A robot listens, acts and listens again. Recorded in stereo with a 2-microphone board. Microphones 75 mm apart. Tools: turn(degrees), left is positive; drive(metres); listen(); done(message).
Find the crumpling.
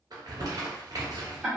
turn(degrees=-60)
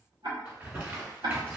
turn(degrees=-25)
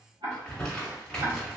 turn(degrees=10)
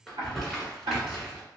done("Found it: crumpling, straight ahead.")